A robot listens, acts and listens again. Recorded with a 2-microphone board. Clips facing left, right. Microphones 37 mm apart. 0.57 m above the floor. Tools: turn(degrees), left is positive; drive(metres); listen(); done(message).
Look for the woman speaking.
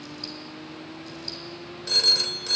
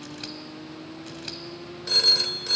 listen()
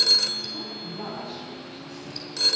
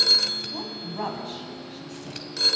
turn(degrees=-70)
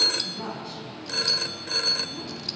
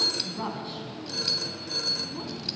turn(degrees=-30)
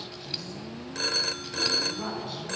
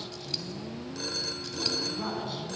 done("Facing the woman speaking, over 4 m away.")